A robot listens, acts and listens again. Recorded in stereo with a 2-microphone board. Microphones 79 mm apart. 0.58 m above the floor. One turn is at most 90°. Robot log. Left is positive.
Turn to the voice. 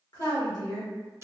note: The woman speaking: about 60° left or 120° left.
cmd yaw +60
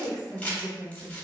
note: So it is at 50° left.
cmd yaw +50
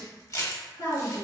note: The woman speaking is now 50° left.
cmd yaw +50
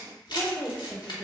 note: The woman speaking is now 35° left.
cmd yaw +35
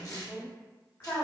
note: The woman speaking is now 20° left.
cmd yaw +20
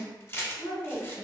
end: Found it: a woman speaking, straight ahead.